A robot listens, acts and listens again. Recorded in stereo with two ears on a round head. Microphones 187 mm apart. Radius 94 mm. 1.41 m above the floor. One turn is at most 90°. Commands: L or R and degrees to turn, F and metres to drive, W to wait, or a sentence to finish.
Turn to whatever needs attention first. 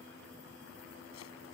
W
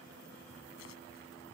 W
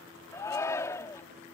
L15
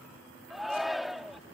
Found it: a shout, straight ahead.